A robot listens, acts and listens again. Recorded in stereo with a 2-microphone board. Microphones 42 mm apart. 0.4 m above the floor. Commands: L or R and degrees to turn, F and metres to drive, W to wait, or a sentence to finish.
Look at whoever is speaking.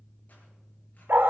W
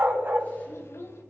L75
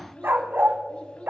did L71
L25
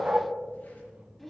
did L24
Found it: a child speaking, straight ahead.